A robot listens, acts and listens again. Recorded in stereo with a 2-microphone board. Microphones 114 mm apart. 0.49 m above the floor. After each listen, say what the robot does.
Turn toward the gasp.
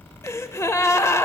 Turn 25° left.
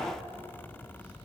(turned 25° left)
Keep listening.
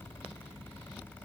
I heard a gasp, but can't make it out now. It was about straight ahead or 130° left.